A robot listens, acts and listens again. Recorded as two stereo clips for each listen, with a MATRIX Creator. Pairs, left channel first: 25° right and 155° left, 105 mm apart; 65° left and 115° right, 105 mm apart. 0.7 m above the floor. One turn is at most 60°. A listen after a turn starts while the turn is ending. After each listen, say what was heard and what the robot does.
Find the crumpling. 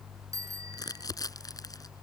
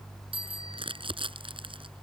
The crumpling: 75° right. Turn 60° right.
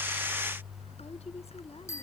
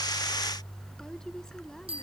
Nothing new. It was at 15° right. Turn 15° right.
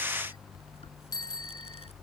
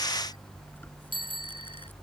Keep listening.
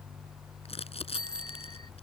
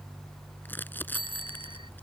Facing the crumpling.